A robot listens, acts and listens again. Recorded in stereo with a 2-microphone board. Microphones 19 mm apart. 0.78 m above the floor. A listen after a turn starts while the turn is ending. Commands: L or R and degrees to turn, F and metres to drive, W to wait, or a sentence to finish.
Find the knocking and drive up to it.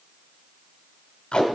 W
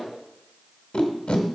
W
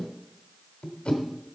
I can't make out knocking, only tape being pulled.